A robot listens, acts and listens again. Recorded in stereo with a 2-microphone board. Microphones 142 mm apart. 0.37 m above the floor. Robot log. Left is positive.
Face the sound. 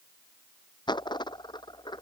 note: The dropped coin: about 30° left or 150° left.
cmd yaw +30
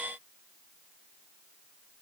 cmd idle
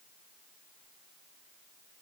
end: I heard a dropped coin, but can't make it out now. It was about straight ahead or 120° left.